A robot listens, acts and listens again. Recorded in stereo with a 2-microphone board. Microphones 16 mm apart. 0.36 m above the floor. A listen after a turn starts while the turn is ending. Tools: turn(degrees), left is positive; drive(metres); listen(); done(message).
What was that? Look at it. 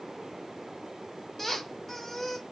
turn(degrees=30)
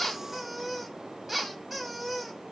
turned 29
turn(degrees=-15)
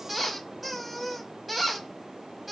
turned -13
done("Found it: a squeak, straight ahead.")